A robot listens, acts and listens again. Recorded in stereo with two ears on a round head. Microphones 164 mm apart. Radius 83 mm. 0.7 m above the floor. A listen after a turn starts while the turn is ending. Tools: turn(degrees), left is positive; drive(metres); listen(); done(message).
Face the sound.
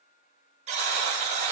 turn(degrees=-40)
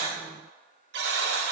turn(degrees=-100)
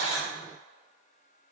listen()
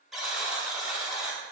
done("Facing the buzzer.")